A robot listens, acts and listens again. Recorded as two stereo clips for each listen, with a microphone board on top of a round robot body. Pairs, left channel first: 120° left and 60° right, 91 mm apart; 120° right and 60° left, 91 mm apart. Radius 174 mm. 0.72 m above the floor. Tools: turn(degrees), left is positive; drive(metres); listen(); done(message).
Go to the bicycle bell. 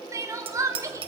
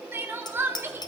turn(degrees=-75)
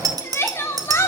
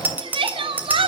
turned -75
turn(degrees=-10)
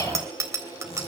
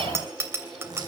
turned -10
drive(metres=1.0)
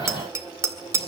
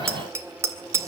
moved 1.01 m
drive(metres=1.0)
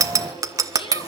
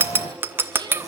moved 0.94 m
drive(metres=1.0)
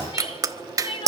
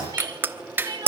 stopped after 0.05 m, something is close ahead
turn(degrees=-10)
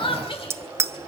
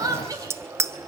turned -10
done("I am next to the bicycle bell.")